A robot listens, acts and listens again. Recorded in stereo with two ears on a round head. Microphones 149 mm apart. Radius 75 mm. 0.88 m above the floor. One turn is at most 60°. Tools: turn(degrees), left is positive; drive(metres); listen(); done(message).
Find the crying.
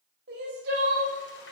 turn(degrees=-60)
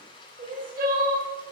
turn(degrees=-50)
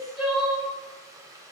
done("Facing the crying, 2 to 4 m away.")